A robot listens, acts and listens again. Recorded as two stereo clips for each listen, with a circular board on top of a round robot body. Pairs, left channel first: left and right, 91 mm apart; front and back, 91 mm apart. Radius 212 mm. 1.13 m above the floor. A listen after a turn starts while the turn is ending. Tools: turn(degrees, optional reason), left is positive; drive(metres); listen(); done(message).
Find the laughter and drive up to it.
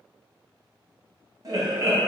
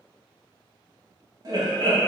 turn(degrees=-135, reason="The laughter: 135° right.")
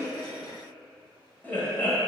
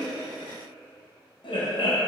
turn(degrees=20, reason="The laughter is now 20° left.")
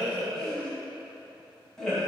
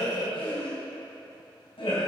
drive(metres=1.0)
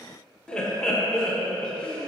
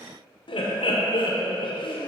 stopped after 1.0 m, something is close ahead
turn(degrees=10, reason="The laughter is now 10° left.")
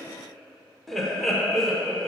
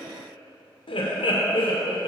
done("Arrived at the laughter, straight ahead.")